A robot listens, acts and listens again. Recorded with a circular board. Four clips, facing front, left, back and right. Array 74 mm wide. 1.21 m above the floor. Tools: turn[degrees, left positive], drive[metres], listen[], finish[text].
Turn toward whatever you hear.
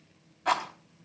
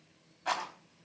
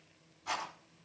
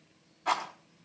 Thought: The rattle: 10° left.
Action: turn[10]
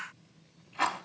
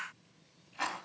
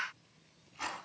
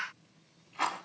Action: finish[Facing the rattle, over 4 m away.]